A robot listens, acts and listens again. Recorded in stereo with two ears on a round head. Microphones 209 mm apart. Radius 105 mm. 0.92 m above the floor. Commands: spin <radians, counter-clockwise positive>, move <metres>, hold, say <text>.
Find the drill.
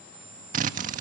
spin -0.61
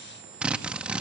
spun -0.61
say Facing the drill, 1 to 2 m away.